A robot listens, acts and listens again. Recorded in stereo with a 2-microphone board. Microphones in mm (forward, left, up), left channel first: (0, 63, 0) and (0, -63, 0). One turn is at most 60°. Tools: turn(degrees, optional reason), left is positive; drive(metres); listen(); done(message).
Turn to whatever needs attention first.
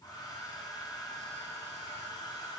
listen()
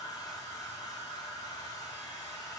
listen()
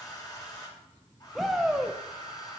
turn(degrees=30)
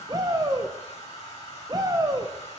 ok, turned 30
turn(degrees=-30, reason="So it is at 30° right.")
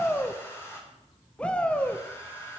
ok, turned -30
turn(degrees=10, reason="The shout is now 10° left.")
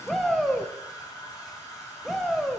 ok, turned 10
done("Found it: a shout, straight ahead, under 1 m away.")